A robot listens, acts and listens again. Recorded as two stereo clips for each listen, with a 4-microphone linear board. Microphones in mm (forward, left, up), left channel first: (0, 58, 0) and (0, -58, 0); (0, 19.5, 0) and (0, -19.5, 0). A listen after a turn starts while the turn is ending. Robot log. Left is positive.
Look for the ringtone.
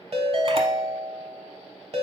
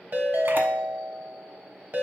note: The ringtone: about 60° right or 120° right.
cmd yaw -60
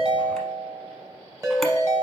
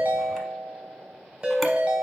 note: So it is at 35° right.
cmd yaw -35
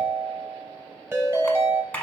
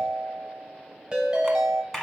note: The ringtone is now 25° right.
cmd yaw -25
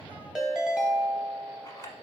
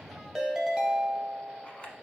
note: The ringtone is now 10° right.
cmd yaw -10
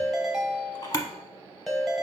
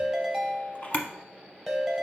end: Facing the ringtone, under 1 m away.